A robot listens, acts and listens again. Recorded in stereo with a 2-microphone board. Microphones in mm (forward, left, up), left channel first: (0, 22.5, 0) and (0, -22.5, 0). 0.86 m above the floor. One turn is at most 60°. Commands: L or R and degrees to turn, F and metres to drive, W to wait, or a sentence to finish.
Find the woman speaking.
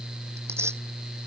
W
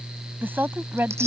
R50
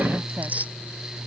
W
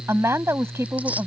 R60
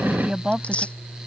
R20
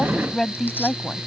Facing the woman speaking.